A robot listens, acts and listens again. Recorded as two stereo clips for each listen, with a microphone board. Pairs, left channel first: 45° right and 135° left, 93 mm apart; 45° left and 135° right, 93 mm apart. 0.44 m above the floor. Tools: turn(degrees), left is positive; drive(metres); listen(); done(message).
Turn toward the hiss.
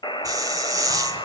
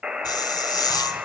turn(degrees=90)
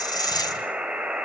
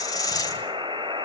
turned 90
done("Found it: a hiss, straight ahead, 2 to 4 m away.")